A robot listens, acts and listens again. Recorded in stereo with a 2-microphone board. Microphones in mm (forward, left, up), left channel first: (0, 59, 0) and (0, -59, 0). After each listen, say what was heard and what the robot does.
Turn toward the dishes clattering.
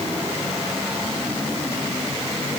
Keep listening.
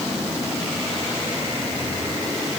Keep listening.
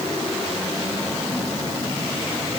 I can't make out dishes clattering to turn to.